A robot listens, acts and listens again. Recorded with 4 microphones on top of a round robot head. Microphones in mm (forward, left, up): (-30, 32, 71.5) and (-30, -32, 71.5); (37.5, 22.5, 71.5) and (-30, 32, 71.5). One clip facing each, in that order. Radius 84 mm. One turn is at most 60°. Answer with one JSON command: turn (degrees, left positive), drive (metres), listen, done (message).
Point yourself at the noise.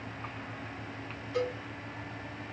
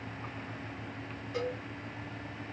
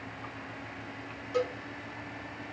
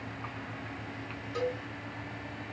{"turn": -20}
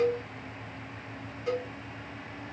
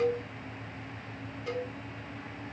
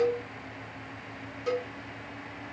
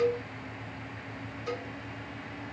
{"done": "Facing the cowbell, 1 to 2 m away."}